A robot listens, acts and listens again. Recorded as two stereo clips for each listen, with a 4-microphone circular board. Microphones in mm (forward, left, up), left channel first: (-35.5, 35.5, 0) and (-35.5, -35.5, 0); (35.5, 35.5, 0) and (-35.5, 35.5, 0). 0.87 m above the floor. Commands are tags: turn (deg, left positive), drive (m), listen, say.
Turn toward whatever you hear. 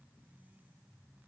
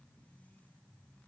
<listen/>
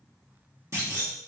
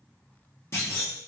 <turn deg="-45"/>
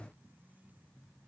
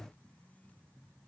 <say>Facing where the clunk came from. I can't hear it now.</say>